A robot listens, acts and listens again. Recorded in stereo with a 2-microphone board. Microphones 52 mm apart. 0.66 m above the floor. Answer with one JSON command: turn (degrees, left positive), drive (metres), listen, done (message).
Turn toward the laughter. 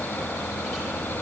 {"listen": true}
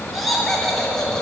{"turn": 30}
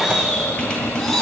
{"turn": 30}
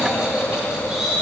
{"done": "Found it: laughter, straight ahead, 2 to 4 m away."}